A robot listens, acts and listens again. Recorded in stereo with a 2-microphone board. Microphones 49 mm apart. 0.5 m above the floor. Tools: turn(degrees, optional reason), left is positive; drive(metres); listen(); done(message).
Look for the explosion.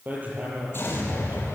turn(degrees=50, reason="The explosion: about 50° left or 130° left.")
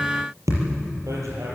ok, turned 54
listen()
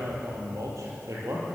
done("I heard an explosion, but can't make it out now. It was about 5° right or 75° left.")